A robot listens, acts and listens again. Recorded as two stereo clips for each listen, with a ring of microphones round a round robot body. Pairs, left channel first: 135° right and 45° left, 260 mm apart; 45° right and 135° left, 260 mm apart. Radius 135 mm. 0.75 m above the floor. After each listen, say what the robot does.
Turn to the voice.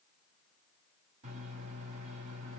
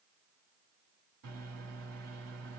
Keep listening.
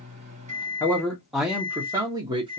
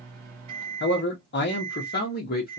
Turn 20° right.
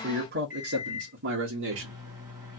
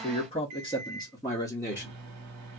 Turn 35° left.
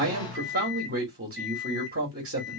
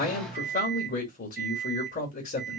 Found it: a man speaking, straight ahead, 1 to 2 m away.